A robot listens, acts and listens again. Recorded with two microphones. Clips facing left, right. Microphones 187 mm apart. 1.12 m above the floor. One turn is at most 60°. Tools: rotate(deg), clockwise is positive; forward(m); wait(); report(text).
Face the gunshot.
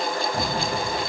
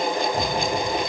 rotate(-30)
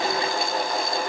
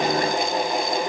wait()
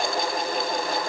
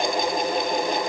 report("I heard a gunshot, but can't make it out now. It was about straight ahead or 120° left.")